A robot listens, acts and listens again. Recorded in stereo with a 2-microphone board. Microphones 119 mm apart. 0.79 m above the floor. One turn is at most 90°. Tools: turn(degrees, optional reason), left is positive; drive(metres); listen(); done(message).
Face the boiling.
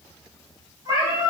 listen()
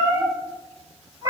listen()
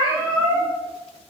done("I can't make out boiling, only a cat meowing.")